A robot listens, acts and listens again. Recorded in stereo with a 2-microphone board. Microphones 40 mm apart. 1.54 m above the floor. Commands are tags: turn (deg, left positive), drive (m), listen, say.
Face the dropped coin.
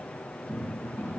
<listen/>
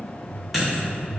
<turn deg="-30"/>
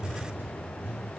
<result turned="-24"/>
<listen/>
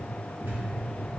<say>I heard a dropped coin, but can't make it out now. It was about 15° left or 150° right.</say>